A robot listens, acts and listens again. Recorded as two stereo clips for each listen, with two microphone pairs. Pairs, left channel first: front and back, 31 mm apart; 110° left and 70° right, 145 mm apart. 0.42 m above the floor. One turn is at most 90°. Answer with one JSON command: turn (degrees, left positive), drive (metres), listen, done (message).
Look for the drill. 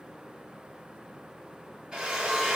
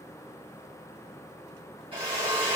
{"turn": -90}
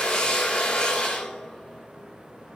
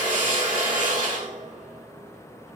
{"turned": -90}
{"turn": -50}
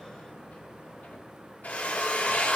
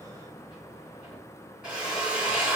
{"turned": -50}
{"turn": 15}
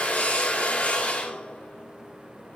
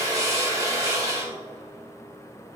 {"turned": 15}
{"done": "Facing the drill."}